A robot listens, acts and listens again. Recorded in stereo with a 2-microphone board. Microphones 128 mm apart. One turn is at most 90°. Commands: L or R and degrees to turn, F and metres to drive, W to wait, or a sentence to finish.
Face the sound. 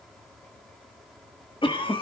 L40
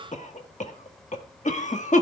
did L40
L90
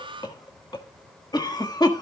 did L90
L35
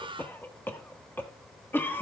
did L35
L15
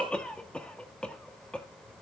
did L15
L10
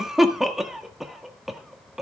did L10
Found it: a cough, straight ahead.